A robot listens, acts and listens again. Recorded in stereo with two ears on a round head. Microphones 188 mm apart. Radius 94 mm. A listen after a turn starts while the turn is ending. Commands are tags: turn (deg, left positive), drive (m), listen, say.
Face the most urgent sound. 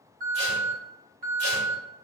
<turn deg="-45"/>
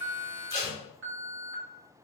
<turn deg="-85"/>
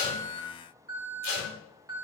<turn deg="-20"/>
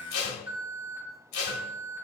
<turn deg="-10"/>
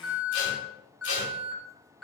<say>Facing the alarm, 1 to 2 m away.</say>